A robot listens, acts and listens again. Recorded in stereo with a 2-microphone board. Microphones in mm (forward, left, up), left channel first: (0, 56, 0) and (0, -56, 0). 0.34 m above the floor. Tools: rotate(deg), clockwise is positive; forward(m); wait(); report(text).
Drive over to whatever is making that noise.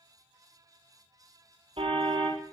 rotate(55)
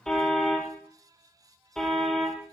forward(1.0)
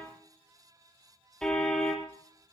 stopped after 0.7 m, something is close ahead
report("Something is in my way. I am facing the car horn but have not reached it.")